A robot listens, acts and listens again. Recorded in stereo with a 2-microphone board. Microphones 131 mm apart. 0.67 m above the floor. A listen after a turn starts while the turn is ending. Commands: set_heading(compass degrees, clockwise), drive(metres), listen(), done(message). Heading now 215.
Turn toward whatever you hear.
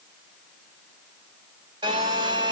set_heading(250)
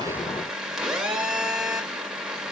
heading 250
done("Facing the phone buzzing, 1 to 2 m away.")